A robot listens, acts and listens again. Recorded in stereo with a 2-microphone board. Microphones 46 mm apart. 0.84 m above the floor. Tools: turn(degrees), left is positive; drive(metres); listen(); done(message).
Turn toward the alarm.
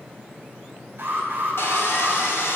turn(degrees=-45)
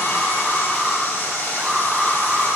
done("Facing the alarm, over 4 m away.")